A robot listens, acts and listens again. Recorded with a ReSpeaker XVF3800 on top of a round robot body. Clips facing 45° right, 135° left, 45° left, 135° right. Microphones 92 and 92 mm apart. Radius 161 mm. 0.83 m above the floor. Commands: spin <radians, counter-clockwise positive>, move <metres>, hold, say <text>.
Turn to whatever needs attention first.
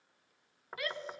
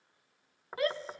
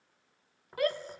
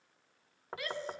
spin 1.40
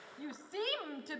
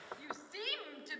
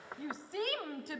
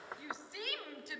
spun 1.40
say Facing the shout.